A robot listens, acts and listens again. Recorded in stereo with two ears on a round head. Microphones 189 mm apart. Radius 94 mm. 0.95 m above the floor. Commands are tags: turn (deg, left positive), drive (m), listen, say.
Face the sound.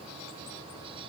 <listen/>
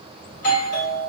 <turn deg="35"/>
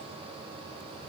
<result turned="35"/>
<listen/>
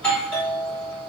<turn deg="10"/>
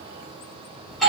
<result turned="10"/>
<say>Found it: a doorbell, straight ahead.</say>